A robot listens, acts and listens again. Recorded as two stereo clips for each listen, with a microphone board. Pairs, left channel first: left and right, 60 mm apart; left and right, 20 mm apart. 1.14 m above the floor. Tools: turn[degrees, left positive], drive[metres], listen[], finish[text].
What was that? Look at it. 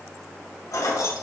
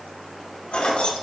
Action: turn[90]
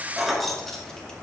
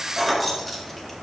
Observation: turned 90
Action: finish[Found it: keys jangling, straight ahead.]